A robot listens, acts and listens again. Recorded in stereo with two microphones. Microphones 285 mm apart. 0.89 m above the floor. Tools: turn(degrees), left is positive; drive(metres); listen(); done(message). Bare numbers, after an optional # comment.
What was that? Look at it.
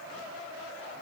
listen()
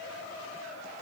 listen()
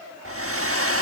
# The hair dryer: about 55° right or 125° right.
turn(-55)
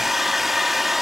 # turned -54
done("Found it: a hair dryer, straight ahead.")